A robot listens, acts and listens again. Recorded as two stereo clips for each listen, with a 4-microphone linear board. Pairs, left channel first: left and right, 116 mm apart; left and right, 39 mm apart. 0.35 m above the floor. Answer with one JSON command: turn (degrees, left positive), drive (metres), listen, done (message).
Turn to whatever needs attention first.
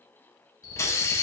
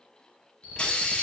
{"turn": 30}
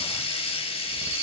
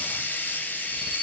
{"listen": true}
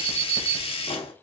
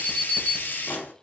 {"turn": 10}
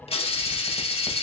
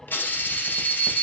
{"done": "Found it: an alarm, straight ahead, 1 to 2 m away."}